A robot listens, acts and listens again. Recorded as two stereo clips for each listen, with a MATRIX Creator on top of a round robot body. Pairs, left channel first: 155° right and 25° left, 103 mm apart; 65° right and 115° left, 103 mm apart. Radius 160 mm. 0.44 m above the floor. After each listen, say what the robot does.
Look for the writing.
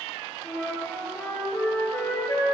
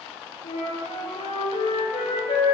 Keep listening.
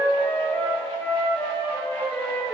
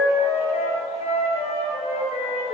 Keep listening.
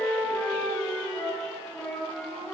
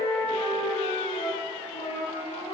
I can't make out writing to turn to.